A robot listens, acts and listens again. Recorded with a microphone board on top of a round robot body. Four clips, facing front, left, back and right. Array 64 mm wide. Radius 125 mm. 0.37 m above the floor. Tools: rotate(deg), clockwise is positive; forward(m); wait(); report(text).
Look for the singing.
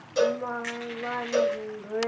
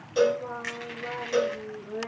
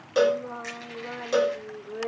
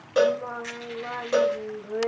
rotate(30)
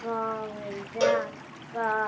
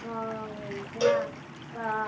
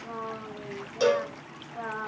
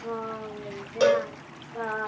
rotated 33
report("Found it: singing, straight ahead.")